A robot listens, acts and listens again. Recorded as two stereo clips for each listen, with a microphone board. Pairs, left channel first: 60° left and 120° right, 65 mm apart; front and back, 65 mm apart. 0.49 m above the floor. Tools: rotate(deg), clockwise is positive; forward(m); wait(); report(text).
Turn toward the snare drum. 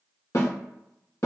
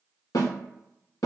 rotate(-25)
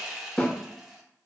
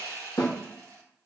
rotate(10)
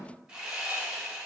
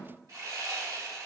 wait()
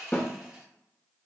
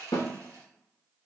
report("Found it: a snare drum, straight ahead, 1 to 2 m away.")